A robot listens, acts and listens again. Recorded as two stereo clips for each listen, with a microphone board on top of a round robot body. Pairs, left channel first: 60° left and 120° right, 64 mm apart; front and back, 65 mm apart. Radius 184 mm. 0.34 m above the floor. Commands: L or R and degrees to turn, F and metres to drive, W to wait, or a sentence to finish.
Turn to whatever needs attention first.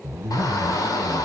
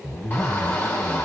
L65
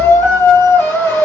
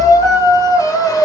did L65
L15
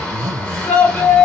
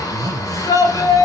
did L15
Found it: a shout, straight ahead.